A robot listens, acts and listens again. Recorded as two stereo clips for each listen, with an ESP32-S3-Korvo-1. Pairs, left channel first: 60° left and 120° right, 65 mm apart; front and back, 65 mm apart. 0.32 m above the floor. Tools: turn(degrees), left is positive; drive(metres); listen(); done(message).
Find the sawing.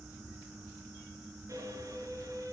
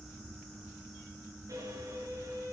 listen()
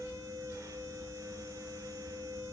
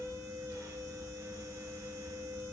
listen()
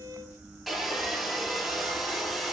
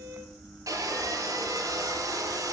turn(degrees=155)
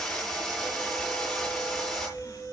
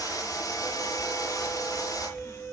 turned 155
turn(degrees=-20)
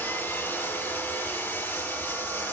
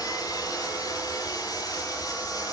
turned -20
done("Facing the sawing, over 4 m away.")